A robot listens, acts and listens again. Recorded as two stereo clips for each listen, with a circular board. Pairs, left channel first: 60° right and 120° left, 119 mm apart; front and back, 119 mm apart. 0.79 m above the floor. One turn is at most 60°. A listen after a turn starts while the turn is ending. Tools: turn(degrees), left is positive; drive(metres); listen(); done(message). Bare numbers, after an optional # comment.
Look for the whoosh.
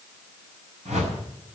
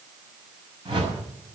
# The whoosh: 130° left.
turn(60)
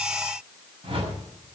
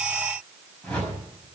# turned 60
# The whoosh is now 80° left.
turn(60)
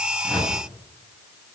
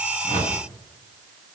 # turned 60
# The whoosh is now 25° left.
turn(25)
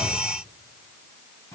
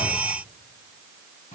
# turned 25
listen()
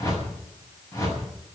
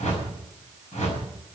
done("Facing the whoosh, over 4 m away.")